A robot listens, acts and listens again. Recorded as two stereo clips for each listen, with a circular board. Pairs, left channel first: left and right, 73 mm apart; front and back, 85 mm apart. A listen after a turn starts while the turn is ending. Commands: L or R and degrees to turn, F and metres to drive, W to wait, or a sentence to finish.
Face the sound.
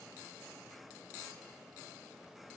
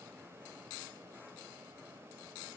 W
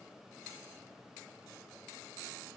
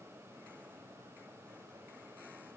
W
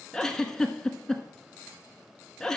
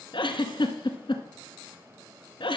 Found it: a giggle, straight ahead.